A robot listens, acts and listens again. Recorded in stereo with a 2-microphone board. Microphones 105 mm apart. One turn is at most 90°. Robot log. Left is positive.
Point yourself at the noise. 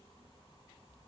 cmd idle
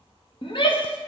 note: The shout: about 55° left or 125° left.
cmd yaw +55
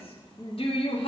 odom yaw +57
note: So it is at 65° left.
cmd yaw +65
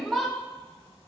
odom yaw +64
end: Facing the shout.